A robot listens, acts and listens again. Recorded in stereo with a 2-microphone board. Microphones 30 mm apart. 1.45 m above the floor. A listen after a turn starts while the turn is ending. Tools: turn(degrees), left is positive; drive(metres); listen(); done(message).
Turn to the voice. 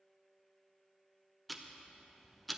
listen()
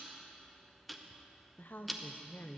turn(degrees=90)
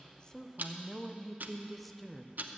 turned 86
done("Facing the woman speaking.")